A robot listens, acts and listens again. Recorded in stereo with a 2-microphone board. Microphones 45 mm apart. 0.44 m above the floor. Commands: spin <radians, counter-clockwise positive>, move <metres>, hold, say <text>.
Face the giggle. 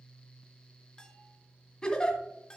spin 0.35
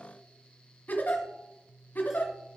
spin 2.44
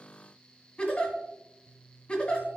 spin 0.44
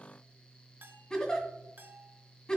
spin 0.35
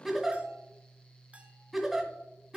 say Facing the giggle, 1 to 2 m away.